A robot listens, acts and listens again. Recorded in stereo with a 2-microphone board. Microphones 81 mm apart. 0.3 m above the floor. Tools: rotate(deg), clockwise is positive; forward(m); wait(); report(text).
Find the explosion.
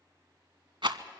wait()
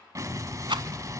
rotate(40)
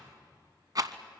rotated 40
wait()
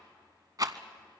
report("I heard an explosion, but can't make it out now. It was about straight ahead or 100° right.")